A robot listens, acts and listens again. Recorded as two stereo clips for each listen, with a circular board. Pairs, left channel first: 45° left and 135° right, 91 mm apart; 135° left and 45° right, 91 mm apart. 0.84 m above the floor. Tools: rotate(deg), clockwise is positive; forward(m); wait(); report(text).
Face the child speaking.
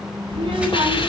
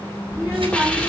rotate(110)
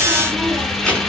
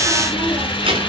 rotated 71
rotate(35)
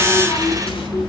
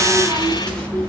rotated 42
report("Facing the child speaking, over 4 m away.")